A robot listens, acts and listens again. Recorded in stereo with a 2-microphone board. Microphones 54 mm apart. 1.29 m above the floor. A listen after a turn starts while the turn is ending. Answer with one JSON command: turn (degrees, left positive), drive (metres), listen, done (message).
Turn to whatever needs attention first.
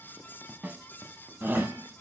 {"turn": -35}
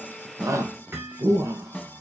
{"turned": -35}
{"turn": -105}
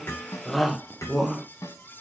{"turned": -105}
{"done": "Facing the shout, 1 to 2 m away."}